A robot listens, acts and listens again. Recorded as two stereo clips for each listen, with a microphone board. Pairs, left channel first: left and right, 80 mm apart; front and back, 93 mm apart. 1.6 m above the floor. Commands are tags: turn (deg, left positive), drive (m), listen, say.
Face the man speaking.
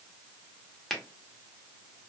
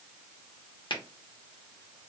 <listen/>
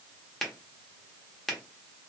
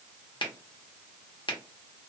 <listen/>
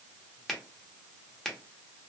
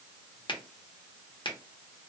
<say>I can't make out a man speaking, only a finger snap.</say>